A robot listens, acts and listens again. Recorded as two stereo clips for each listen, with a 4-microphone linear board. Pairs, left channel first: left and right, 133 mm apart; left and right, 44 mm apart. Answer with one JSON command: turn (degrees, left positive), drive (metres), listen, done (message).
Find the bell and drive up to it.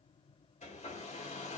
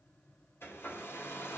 {"listen": true}
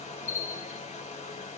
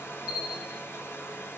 {"turn": -25}
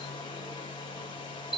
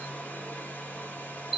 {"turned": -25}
{"drive": 1.0}
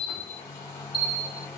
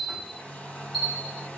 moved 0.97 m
{"drive": 1.0}
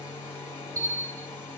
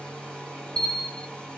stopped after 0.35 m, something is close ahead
{"turn": 10}
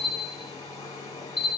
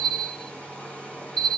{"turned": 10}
{"done": "I am next to the bell."}